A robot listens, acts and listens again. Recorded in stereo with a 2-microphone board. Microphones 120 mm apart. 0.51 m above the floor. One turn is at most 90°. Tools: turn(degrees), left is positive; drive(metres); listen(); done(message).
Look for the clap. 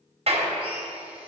turn(degrees=-60)
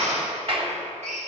turn(degrees=-55)
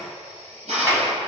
turn(degrees=-30)
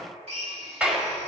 turn(degrees=-10)
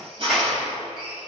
listen()
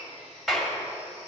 done("Found it: a clap, straight ahead.")